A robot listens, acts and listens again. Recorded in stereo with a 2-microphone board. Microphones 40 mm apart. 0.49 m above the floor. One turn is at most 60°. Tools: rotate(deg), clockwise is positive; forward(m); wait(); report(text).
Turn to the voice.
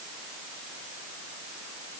wait()
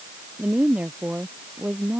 rotate(35)
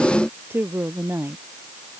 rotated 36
rotate(60)
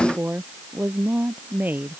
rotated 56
rotate(50)
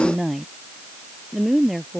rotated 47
report("Facing the woman speaking.")